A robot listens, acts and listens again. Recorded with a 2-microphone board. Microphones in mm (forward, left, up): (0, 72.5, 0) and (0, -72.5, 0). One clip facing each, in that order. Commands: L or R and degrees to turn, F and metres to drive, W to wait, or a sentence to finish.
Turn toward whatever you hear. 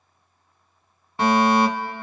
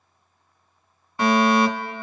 L25
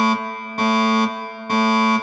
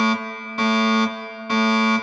L130
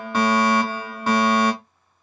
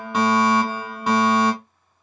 R15
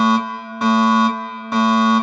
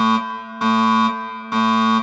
Facing the fire alarm, 1 to 2 m away.